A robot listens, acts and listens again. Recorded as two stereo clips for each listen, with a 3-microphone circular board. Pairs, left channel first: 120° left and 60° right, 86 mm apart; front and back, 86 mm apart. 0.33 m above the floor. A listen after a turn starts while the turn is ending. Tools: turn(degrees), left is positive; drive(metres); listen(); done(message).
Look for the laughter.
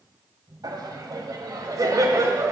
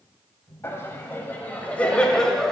turn(degrees=-85)
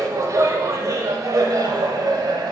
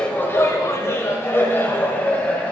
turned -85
turn(degrees=-65)
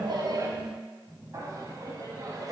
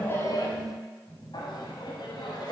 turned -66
turn(degrees=-20)
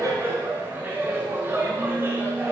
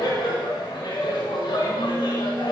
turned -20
done("Found it: laughter, straight ahead.")